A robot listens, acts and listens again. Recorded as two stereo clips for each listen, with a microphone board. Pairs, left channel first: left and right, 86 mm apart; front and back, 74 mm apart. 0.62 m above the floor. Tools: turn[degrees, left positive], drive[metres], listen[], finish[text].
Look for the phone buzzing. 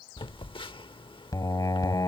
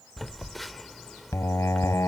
Thought: The phone buzzing: 90° left.
Action: turn[90]
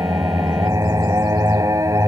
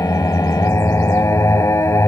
Action: listen[]
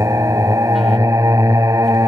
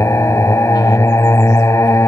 Action: listen[]
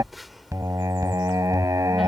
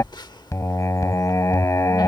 Action: finish[Facing the phone buzzing.]